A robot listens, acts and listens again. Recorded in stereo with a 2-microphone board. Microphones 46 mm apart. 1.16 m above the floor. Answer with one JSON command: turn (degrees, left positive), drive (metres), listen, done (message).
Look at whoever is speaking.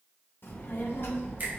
{"turn": 55}
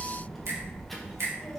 {"done": "Facing the child speaking."}